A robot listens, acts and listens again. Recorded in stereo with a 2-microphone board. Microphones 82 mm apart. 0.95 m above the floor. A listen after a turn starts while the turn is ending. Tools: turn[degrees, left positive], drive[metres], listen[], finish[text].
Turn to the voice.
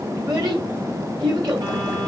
Thought: The child speaking: about 55° right or 125° right.
Action: turn[-55]
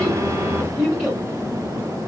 Action: finish[Found it: a child speaking, straight ahead.]